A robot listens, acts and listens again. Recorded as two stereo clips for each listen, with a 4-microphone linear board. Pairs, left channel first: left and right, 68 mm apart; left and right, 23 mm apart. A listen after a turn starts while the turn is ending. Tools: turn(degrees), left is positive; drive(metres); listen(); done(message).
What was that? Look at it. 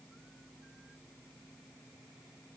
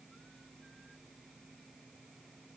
listen()
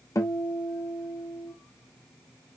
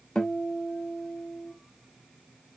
turn(degrees=55)
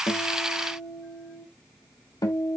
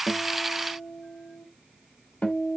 turn(degrees=70)
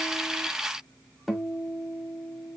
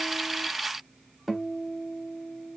done("Found it: a guitar, straight ahead, under 1 m away.")